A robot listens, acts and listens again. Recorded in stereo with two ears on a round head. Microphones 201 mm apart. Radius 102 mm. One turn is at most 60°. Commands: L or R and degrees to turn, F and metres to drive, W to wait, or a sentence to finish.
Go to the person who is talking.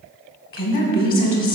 L45
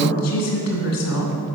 L60
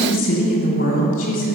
L35
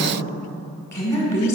L15
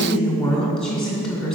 F1.0
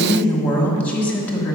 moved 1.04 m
F1.0
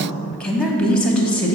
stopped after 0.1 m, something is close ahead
I am next to the woman speaking.